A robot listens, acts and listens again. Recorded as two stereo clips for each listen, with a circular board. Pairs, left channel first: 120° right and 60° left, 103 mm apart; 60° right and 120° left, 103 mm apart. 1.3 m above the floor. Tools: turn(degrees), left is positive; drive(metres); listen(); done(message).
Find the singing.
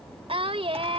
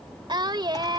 turn(degrees=75)
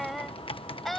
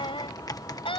turn(degrees=-35)
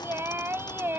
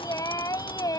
turn(degrees=-10)
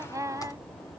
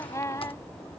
done("Found it: singing, straight ahead.")